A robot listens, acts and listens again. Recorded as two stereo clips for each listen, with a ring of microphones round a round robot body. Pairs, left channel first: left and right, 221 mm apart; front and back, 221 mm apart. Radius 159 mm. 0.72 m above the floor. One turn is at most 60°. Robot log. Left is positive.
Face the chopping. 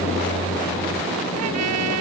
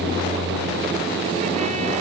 cmd idle
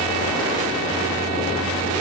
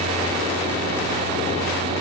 cmd idle
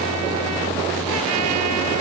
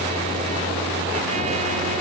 end: I can't make out chopping to turn to.